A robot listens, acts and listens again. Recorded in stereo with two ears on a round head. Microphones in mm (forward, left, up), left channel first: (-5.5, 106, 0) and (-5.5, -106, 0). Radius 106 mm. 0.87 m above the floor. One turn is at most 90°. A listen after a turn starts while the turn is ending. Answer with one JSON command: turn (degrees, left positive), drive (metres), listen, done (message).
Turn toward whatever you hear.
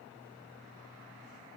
{"listen": true}
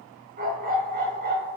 {"turn": -45}
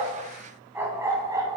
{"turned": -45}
{"turn": -15}
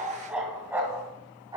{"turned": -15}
{"turn": -15}
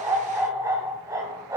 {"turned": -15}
{"turn": -15}
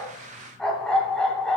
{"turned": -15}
{"done": "Found it: a dog barking, straight ahead, 1 to 2 m away."}